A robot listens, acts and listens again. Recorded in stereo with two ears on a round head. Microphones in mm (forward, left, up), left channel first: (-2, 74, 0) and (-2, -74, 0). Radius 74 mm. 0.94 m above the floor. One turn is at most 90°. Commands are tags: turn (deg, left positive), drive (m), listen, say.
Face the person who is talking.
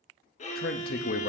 <turn deg="60"/>
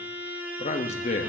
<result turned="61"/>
<turn deg="45"/>
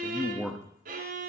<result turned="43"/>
<say>Found it: a man speaking, straight ahead.</say>